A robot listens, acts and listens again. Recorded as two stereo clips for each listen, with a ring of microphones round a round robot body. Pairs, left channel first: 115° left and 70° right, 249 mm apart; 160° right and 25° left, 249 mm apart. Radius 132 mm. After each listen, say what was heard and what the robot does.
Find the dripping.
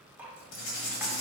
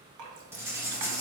The dripping: 15° left. Turn 15° left.
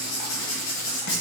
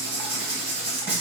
Keep listening.
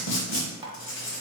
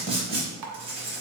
Found it: dripping, straight ahead.